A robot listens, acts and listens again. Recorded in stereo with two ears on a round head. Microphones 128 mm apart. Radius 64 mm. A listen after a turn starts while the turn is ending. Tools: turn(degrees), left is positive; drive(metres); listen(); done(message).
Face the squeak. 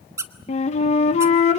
turn(degrees=-20)
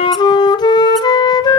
listen()
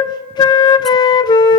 listen()
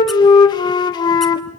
done("I heard a squeak, but can't make it out now. It was about straight ahead or 140° right.")